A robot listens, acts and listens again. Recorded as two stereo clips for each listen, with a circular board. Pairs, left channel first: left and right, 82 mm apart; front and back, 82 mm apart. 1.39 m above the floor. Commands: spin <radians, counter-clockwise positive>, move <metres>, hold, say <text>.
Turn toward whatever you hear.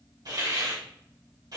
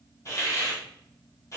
spin -0.87
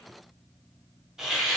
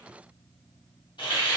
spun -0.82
say Facing the hiss.